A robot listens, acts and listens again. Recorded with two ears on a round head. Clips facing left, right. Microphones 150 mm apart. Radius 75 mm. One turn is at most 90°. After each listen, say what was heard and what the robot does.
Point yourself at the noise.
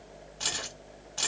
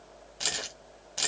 The keys jangling: about 20° right or 160° right. Turn 20° right.
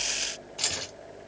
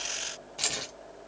Found it: keys jangling, straight ahead.